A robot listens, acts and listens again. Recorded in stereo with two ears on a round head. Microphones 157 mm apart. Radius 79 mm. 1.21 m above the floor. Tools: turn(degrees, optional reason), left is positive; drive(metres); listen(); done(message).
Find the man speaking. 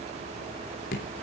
listen()
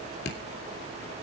listen()
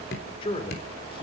turn(degrees=30, reason="The man speaking: about 30° left or 150° left.")
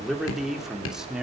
done("Facing the man speaking, 2 to 4 m away.")